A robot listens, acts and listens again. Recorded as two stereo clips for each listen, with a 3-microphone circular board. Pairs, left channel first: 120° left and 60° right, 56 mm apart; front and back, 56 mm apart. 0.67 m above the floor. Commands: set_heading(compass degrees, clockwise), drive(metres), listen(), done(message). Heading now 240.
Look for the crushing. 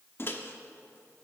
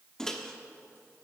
listen()
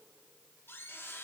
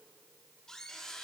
listen()
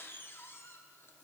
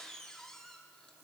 done("I can't make out crushing, only a microwave.")